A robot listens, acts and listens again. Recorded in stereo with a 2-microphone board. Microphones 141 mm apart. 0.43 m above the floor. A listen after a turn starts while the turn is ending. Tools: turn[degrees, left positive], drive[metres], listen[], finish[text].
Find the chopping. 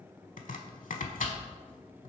Thought: The chopping: about 70° left or 110° left.
Action: turn[70]
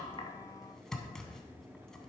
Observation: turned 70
Action: finish[Found it: chopping, straight ahead, under 1 m away.]